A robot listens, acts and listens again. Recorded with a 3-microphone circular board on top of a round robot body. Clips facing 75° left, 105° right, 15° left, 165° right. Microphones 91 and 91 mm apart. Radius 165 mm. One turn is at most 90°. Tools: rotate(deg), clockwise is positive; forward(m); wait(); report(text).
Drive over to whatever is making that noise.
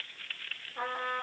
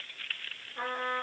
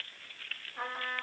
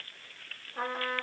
rotate(-90)
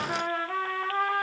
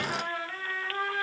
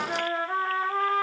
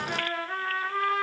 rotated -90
rotate(-70)
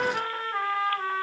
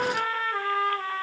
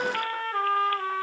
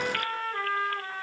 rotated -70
rotate(-10)
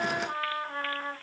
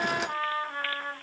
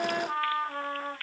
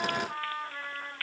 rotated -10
forward(1.0)
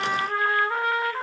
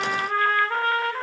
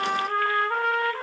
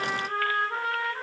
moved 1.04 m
forward(1.0)
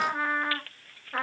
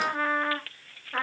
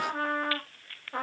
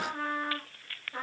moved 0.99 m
rotate(10)
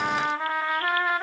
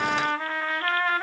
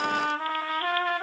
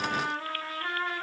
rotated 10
forward(1.0)
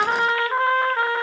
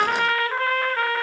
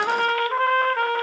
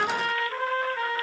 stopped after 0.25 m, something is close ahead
rotate(-10)
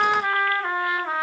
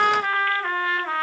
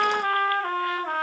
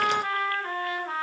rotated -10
report("Arrived at the trumpet, straight ahead.")